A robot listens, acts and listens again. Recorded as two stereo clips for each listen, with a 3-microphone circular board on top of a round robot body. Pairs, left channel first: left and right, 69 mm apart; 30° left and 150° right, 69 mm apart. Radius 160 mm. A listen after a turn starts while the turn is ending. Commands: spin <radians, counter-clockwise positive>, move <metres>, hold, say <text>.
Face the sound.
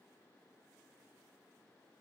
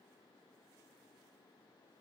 hold
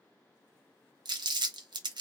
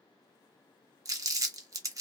spin -1.83
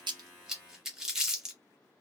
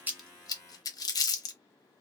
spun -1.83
say Facing the crumpling, under 1 m away.